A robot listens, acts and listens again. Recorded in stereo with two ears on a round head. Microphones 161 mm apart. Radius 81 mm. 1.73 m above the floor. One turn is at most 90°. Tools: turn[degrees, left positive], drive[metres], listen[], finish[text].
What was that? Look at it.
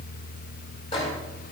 Thought: The microwave: about 30° left or 150° left.
Action: turn[30]
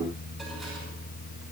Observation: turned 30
Action: listen[]
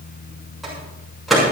Action: finish[Facing the microwave, over 4 m away.]